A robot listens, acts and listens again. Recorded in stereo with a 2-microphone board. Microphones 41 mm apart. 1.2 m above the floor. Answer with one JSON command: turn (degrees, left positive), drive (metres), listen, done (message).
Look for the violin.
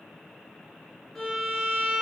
{"turn": 30}
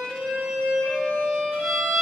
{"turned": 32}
{"turn": -20}
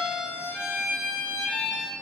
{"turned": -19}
{"done": "Facing the violin, under 1 m away."}